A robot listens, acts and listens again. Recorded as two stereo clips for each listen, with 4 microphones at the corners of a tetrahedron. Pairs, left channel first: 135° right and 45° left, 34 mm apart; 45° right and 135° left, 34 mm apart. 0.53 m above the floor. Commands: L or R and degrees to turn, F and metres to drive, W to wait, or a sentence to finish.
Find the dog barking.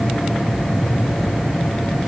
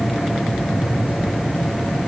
W
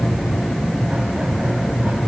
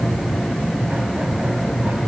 W
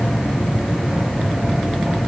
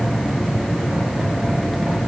I can't make out a dog barking to turn to.